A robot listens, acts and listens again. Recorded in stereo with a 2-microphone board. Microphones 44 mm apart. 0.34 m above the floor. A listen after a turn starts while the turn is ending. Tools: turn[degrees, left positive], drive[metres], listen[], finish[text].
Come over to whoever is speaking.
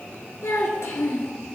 Action: turn[90]
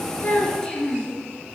Thought: So it is at 15° left.
Action: turn[15]
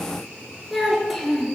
Action: drive[1.0]
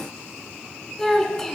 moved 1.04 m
Thought: The child speaking is now 10° left.
Action: turn[10]
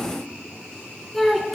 Action: drive[1.0]
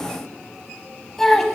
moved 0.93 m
Thought: The child speaking is now 10° left.
Action: turn[10]
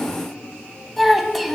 Action: drive[1.0]
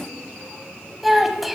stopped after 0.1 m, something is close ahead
Action: finish[I am next to the child speaking.]